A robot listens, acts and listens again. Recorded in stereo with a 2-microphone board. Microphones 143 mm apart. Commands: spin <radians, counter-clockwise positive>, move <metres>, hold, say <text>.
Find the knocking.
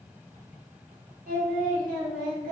hold
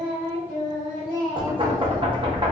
spin -0.61
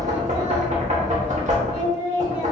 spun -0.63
spin -1.75
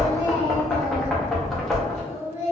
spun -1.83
say Facing the knocking.